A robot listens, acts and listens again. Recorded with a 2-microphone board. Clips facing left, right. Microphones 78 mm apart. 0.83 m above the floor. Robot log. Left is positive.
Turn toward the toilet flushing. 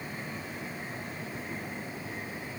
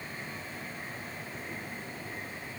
cmd idle
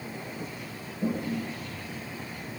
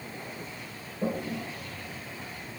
note: The toilet flushing: about 65° right or 115° right.
cmd yaw -65
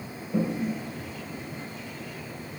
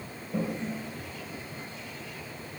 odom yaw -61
note: So it is at 10° right.
cmd yaw -10
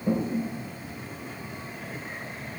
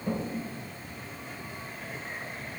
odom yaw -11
end: Facing the toilet flushing, 1 to 2 m away.